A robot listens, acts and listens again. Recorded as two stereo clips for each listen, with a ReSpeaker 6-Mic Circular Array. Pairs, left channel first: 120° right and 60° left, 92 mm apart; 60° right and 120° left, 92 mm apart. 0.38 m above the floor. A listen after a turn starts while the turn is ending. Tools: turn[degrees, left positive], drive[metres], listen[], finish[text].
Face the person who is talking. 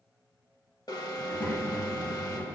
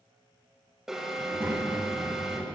Thought: The child speaking: 175° right.
Action: turn[-175]
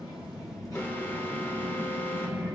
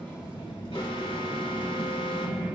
Thought: The child speaking is now 70° right.
Action: turn[-70]
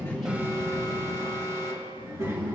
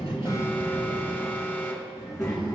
Action: finish[Found it: a child speaking, straight ahead, over 4 m away.]